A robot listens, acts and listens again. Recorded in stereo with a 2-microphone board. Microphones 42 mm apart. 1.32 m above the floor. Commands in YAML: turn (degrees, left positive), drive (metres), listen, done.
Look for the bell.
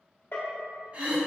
turn: 70
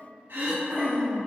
listen: true
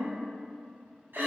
listen: true
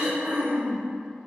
done: "I heard a bell, but can't make it out now. It was about straight ahead or 40° left."